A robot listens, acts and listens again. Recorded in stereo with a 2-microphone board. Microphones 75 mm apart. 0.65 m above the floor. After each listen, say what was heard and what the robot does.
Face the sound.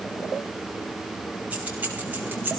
The keys jangling: about 30° right or 150° right. Turn 30° right.
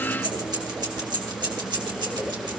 So it is at 105° right. Turn 105° right.
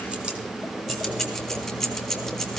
Found it: keys jangling, straight ahead.